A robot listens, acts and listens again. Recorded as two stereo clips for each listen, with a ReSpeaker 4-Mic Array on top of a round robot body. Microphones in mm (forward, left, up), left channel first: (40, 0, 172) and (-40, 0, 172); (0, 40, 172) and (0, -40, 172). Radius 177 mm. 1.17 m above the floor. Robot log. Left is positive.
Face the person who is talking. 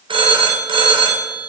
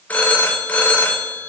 cmd idle
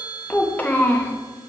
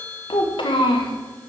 note: The child speaking: 70° left.
cmd yaw +70
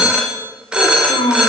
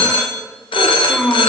end: Facing the child speaking.